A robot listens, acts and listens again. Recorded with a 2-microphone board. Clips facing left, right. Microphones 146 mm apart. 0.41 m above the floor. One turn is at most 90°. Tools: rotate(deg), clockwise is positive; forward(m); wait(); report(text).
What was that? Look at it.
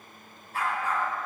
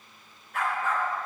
rotate(-35)
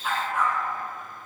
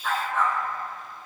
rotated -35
rotate(-10)
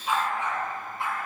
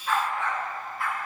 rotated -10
rotate(-25)
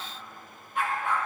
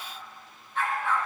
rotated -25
rotate(-15)
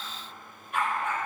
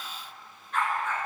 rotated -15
rotate(-10)
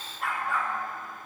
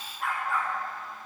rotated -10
report("Facing the dog barking, 2 to 4 m away.")